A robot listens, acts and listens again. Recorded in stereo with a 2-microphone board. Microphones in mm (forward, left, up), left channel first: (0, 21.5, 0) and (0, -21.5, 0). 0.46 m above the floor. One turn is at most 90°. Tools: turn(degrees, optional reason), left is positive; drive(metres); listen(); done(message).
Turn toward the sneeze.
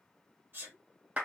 turn(degrees=-50, reason="The sneeze: about 50° right or 130° right.")
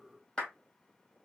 listen()
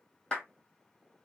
done("I heard a sneeze, but can't make it out now. It was about straight ahead or 80° right.")